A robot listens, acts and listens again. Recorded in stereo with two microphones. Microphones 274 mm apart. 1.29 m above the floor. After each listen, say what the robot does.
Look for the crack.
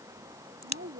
Turn 90° right.
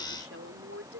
I heard a crack from this way, but can't make it out now.